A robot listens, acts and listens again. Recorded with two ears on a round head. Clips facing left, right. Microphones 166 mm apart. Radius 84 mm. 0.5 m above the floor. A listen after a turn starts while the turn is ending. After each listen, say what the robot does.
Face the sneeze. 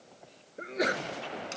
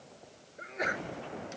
Turn 45° left.
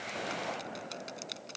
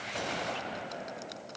Keep listening.
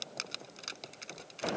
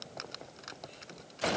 I heard a sneeze, but can't make it out now. It was about straight ahead or 90° left.